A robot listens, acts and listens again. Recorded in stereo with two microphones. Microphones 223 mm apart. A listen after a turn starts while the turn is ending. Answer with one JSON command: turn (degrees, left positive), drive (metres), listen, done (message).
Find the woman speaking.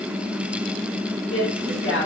{"turn": 65}
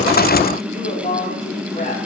{"turn": 35}
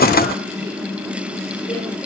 {"listen": true}
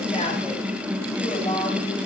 {"turn": 20}
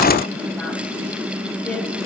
{"listen": true}
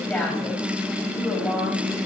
{"listen": true}
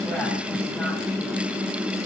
{"done": "I heard a woman speaking from this way, but can't make it out now."}